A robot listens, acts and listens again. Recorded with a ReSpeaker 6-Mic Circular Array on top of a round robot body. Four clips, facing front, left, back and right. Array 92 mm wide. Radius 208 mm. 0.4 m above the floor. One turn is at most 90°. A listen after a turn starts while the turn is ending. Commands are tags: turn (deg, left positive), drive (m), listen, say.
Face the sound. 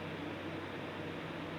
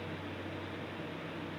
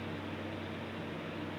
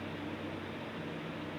<listen/>
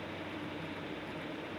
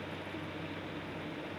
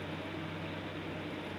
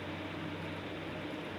<listen/>
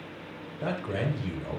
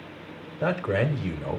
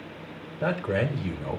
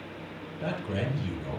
<turn deg="90"/>
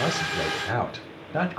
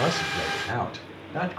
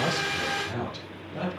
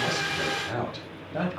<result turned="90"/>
<say>Facing the man speaking.</say>